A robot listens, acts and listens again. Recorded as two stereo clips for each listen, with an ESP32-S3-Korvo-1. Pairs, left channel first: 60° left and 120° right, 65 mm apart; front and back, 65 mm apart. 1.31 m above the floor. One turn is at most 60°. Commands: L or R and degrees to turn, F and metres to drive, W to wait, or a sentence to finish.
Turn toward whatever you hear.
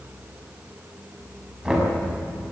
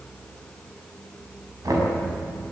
L60
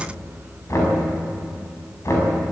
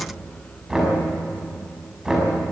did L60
L60
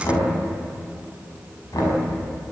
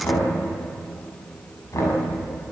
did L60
L40
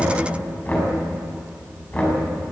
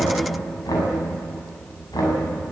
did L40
Facing the knocking.